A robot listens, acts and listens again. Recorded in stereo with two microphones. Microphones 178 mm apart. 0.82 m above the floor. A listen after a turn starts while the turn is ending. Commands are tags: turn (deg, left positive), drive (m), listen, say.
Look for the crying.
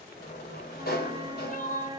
<turn deg="50"/>
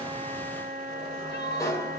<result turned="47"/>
<turn deg="85"/>
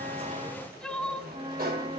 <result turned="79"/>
<say>Found it: crying, straight ahead, 1 to 2 m away.</say>